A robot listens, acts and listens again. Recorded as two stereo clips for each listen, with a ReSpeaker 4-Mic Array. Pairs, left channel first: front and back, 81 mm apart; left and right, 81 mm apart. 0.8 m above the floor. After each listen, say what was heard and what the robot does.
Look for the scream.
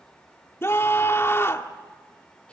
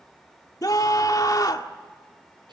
The scream: 55° left. Turn 55° left.
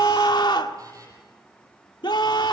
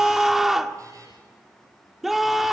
Facing the scream, 1 to 2 m away.